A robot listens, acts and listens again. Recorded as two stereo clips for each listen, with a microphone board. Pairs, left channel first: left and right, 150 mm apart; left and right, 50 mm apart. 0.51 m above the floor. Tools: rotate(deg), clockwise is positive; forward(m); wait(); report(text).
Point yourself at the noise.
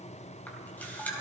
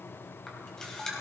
rotate(-30)
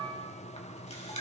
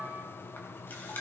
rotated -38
rotate(-130)
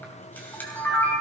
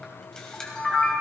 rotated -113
rotate(-15)
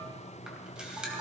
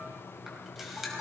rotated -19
report("Facing the camera shutter.")